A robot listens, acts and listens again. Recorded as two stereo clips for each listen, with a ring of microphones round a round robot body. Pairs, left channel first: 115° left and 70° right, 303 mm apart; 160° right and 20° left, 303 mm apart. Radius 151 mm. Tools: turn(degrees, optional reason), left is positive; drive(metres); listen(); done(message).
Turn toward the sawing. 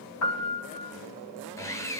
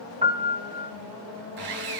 turn(degrees=30, reason="The sawing: 30° left.")
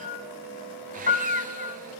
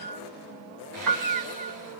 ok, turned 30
listen()
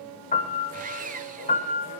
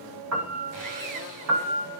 done("Facing the sawing, 1 to 2 m away.")